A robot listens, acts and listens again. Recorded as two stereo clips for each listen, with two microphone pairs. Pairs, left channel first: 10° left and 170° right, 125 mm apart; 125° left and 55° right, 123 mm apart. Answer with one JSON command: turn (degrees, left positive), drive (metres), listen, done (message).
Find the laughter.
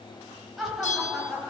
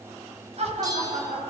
{"turn": -85}
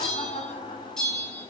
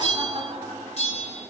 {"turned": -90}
{"done": "Found it: laughter, straight ahead, over 4 m away."}